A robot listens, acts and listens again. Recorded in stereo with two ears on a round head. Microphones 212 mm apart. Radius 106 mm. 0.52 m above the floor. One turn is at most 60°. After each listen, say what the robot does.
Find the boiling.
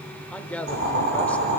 Turn 55° right.
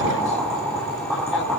Found it: boiling, straight ahead.